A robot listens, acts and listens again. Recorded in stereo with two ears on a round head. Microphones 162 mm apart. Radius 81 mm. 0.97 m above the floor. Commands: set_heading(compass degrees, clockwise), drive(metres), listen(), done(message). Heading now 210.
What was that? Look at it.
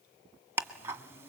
set_heading(240)
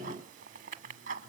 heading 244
set_heading(19)
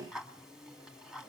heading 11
done("Facing the ticking.")